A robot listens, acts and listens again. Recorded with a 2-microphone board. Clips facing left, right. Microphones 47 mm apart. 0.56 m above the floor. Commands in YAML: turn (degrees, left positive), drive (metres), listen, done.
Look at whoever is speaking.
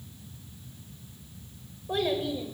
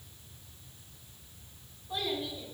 turn: 60
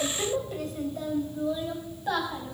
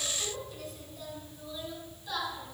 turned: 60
turn: 50
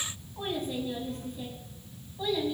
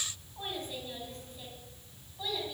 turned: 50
done: "Found it: a child speaking, straight ahead."